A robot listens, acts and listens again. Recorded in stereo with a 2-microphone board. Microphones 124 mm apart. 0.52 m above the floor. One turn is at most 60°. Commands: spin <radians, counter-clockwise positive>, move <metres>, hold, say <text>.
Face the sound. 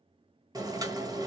spin -0.52
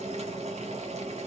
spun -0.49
spin -1.05
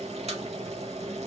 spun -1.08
spin -1.05
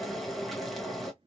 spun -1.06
say Found it: boiling, straight ahead.